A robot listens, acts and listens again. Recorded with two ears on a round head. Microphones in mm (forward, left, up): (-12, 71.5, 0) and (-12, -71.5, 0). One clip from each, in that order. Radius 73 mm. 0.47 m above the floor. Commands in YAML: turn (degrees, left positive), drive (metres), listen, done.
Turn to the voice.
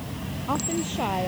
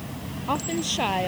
turn: -90
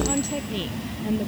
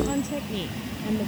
turn: 10
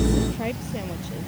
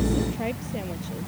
done: "Facing the woman speaking."